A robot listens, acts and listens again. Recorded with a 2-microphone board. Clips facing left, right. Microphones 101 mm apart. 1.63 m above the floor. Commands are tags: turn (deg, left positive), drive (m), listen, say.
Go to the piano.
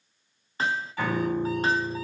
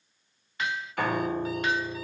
<turn deg="-65"/>
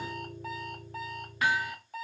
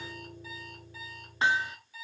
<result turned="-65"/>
<turn deg="-35"/>
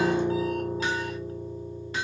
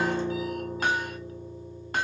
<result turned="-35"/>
<drive m="1.0"/>
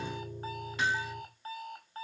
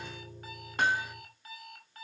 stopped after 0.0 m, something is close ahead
<say>Something is in my way. I am facing the piano but have not reached it.</say>